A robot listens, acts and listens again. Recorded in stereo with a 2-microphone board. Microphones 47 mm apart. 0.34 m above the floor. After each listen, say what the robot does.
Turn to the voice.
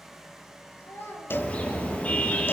Turn 75° left.
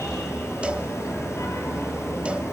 Keep listening.
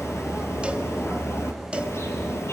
Keep listening.
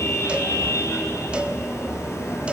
I heard a child speaking, but can't make it out now. It was about straight ahead or 30° left.